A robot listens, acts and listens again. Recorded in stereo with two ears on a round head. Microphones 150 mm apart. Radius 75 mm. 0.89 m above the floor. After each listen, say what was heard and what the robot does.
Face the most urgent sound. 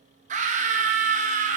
The scream: about 45° right or 135° right. Turn 45° right.
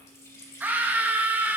So it is at 10° right. Turn 10° right.
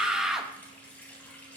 Found it: a scream, straight ahead, under 1 m away.